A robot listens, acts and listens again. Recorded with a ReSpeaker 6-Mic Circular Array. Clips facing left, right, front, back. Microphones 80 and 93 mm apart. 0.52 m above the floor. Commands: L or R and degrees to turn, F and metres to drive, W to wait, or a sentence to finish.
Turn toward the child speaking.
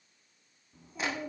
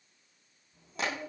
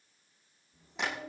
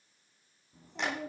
L170
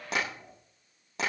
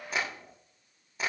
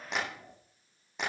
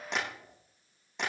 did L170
Found it: a child speaking, straight ahead.